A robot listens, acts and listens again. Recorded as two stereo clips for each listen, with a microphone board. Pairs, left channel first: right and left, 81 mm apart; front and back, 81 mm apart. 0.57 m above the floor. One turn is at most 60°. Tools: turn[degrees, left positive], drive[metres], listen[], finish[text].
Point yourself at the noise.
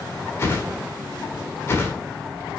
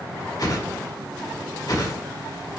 Thought: The whoosh: 35° right.
Action: turn[-35]
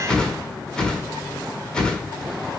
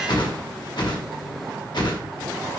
Thought: The whoosh is now 10° right.
Action: turn[-10]
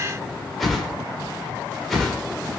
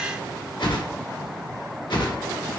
Action: finish[Facing the whoosh.]